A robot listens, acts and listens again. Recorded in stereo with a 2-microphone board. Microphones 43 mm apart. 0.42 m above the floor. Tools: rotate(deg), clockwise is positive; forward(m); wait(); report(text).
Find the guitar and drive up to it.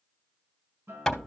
rotate(75)
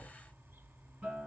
rotate(25)
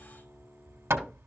wait()
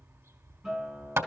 forward(1.0)
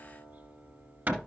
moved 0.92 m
forward(1.0)
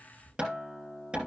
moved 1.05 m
forward(1.0)
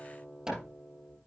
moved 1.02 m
rotate(-10)
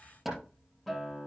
forward(1.0)
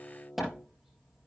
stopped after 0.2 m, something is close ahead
report("Arrived at the guitar, straight ahead.")